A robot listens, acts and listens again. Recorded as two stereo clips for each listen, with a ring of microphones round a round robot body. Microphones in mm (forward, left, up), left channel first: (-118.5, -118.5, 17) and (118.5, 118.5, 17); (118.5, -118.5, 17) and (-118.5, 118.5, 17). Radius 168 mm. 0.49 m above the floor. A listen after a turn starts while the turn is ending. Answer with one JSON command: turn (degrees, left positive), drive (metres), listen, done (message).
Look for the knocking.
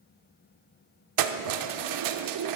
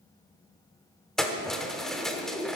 {"listen": true}
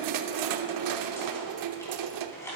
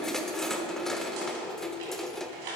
{"turn": 145}
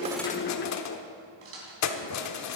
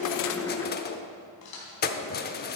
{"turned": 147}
{"done": "Found it: knocking, straight ahead."}